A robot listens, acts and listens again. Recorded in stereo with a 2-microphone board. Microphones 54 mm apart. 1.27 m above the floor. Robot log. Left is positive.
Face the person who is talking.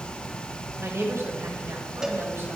note: The woman speaking: about 60° right or 120° right.
cmd yaw -60
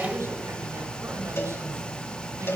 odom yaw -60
note: So it is at 70° right.
cmd yaw -70
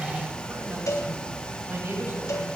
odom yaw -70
note: The woman speaking is now 45° right.
cmd yaw -45
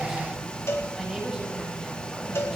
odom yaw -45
end: Found it: a woman speaking, straight ahead.